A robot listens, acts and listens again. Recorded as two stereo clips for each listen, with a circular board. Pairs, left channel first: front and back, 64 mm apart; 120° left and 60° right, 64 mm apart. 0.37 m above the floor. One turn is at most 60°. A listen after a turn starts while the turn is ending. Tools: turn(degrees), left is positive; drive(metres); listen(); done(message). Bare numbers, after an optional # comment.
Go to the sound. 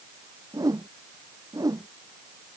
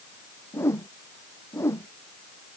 # The whoosh: 165° left.
turn(60)
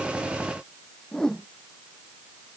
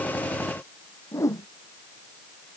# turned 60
# The whoosh is now 80° left.
turn(60)
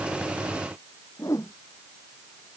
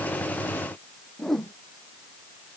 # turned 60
# The whoosh is now 35° left.
turn(35)
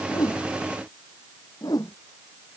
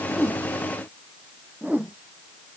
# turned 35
drive(1.0)
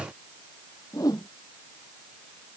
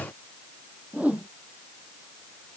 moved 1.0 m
# The whoosh is now 10° left.
turn(10)
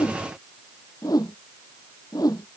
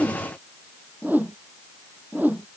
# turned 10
drive(1.0)
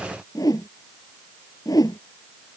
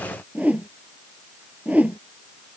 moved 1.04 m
drive(1.0)
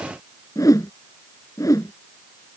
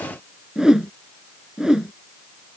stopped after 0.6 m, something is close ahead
# The whoosh is now 20° left.
turn(20)
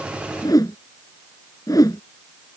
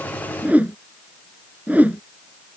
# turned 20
done("Arrived at the whoosh, straight ahead.")